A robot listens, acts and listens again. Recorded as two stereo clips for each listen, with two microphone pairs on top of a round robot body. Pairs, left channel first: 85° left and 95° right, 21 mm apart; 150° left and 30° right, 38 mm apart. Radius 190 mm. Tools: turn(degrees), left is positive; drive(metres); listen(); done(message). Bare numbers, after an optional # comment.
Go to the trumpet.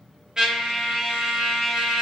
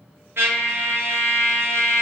# The trumpet: 35° right.
turn(-35)
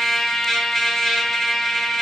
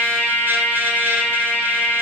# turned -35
drive(1.0)
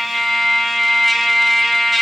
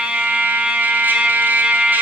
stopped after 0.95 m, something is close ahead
done("Arrived at the trumpet, straight ahead.")